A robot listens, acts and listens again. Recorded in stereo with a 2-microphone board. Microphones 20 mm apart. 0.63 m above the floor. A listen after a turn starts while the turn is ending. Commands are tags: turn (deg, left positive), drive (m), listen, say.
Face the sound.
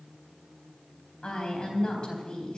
<turn deg="45"/>
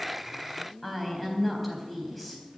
<say>Found it: a woman speaking, straight ahead.</say>